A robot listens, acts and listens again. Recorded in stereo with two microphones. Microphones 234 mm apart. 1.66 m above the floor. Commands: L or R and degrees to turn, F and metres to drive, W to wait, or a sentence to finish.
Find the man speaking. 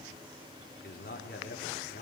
L45
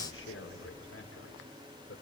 L90
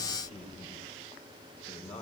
L30
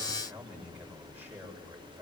R10
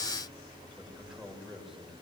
Facing the man speaking.